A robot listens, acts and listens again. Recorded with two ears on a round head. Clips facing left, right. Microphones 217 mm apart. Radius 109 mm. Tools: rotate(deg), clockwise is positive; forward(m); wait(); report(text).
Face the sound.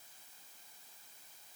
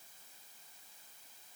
wait()
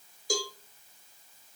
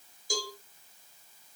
rotate(-55)
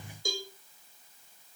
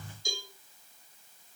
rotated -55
rotate(-55)
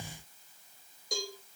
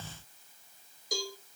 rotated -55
report("Facing the cowbell.")